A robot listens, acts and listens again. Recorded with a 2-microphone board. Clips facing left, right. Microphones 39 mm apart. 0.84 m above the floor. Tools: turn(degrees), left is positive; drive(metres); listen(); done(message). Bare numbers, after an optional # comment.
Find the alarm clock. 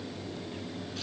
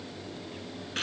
listen()
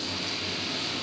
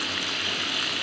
listen()
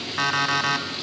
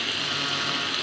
# The alarm clock: about 75° left or 105° left.
turn(75)
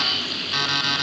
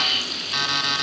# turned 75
done("Facing the alarm clock, 2 to 4 m away.")